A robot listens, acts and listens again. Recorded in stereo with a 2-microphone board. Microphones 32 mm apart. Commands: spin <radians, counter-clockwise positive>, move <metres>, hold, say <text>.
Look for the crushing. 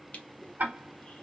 spin 0.79
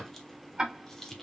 spin 0.26
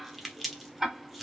say Found it: crushing, straight ahead.